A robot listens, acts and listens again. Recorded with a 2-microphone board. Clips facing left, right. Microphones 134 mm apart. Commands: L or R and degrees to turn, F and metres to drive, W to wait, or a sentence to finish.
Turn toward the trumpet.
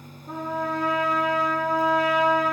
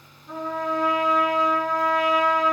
L45
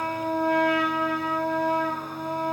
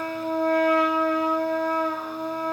L90
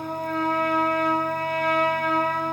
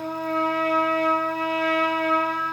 L40
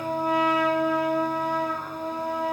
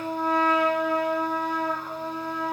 L10
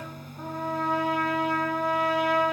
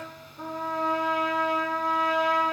Facing the trumpet, over 4 m away.